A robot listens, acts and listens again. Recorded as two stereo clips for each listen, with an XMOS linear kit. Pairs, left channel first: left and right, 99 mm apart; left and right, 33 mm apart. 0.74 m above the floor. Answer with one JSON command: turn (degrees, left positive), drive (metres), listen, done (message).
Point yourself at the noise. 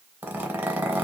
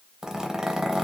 {"turn": -20}
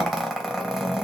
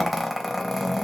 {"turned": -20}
{"done": "Facing the zipper, under 1 m away."}